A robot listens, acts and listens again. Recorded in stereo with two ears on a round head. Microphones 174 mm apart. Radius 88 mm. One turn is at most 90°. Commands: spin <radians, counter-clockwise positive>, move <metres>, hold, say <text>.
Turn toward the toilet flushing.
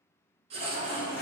spin 0.87
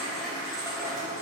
say Found it: a toilet flushing, straight ahead.